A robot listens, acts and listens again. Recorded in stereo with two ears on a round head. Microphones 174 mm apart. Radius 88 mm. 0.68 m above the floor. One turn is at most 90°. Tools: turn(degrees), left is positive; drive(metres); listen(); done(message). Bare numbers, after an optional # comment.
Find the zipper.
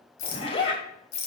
# The zipper: about 30° left or 150° left.
turn(30)
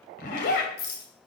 # So it is at 120° left.
turn(90)
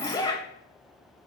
# The zipper is now 20° left.
turn(20)
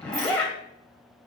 done("Facing the zipper, 2 to 4 m away.")